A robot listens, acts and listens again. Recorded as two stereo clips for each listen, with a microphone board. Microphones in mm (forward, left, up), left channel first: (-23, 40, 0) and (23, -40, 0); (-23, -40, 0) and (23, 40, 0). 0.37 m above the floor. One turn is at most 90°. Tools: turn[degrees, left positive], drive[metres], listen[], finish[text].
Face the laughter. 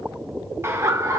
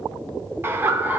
Thought: The laughter: 10° right.
Action: turn[-10]
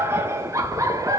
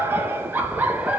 Thought: The laughter is now 15° right.
Action: turn[-15]
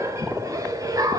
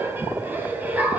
Thought: The laughter is now 15° right.
Action: turn[-15]
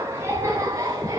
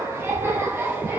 Action: finish[Found it: laughter, straight ahead.]